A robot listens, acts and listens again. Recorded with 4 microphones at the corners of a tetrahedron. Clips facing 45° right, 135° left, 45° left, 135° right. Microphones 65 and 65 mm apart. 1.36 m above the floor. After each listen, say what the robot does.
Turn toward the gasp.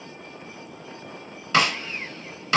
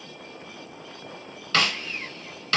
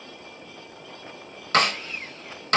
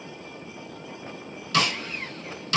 Keep listening.
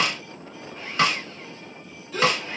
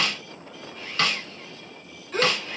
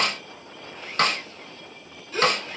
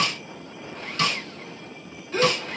Turn 175° left.
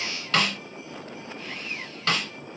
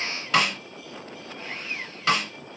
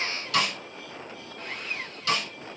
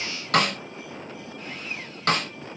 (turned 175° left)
I heard a gasp from this way, but can't make it out now.